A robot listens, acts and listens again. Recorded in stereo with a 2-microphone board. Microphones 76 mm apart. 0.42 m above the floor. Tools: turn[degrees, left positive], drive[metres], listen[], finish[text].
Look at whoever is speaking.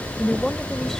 Action: turn[30]
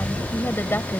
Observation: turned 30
Thought: So it is at 145° left.
Action: turn[145]
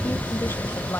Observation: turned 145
Thought: The woman speaking is now 35° left.
Action: turn[35]
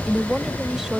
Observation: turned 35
Action: finish[Facing the woman speaking.]